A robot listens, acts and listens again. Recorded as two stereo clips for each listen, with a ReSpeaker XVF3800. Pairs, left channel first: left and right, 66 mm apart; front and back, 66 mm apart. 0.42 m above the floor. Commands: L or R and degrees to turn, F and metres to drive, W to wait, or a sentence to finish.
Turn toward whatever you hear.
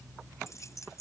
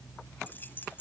L55
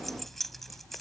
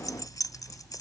Facing the keys jangling.